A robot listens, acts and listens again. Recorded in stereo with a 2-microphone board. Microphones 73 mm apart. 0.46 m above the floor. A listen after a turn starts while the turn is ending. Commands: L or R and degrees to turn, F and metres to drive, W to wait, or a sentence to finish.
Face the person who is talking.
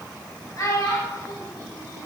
L40
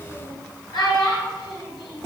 L95
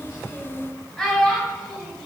Facing the child speaking, 1 to 2 m away.